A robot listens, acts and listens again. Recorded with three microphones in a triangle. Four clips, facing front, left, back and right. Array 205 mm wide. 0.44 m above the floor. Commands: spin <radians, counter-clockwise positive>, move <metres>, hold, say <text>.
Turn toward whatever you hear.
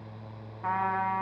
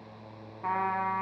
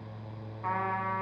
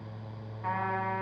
spin 0.70
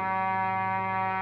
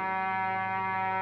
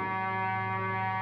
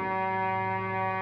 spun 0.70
spin 0.52
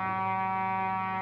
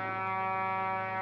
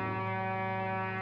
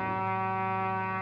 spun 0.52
say Found it: a trumpet, straight ahead, 1 to 2 m away.